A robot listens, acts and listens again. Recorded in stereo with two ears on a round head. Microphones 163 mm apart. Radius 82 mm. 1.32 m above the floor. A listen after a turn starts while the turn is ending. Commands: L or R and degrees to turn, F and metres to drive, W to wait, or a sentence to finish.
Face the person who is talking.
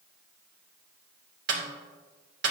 W
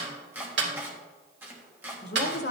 L60
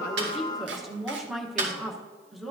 Found it: a woman speaking, straight ahead.